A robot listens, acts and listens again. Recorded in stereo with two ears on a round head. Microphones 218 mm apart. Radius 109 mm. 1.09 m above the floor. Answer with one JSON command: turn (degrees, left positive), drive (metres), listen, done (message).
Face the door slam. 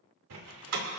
{"turn": -75}
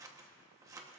{"listen": true}
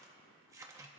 {"done": "I heard a door slam, but can't make it out now. It was about straight ahead or 30° right."}